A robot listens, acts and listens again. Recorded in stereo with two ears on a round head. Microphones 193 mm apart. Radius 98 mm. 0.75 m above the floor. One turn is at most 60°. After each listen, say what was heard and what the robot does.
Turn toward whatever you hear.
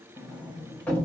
Turn 30° left.
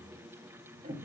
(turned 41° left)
So it is at 35° right. Turn 35° right.
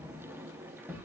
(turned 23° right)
The sliding door is now 10° right. Turn 10° right.
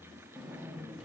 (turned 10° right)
Facing the sliding door, under 1 m away.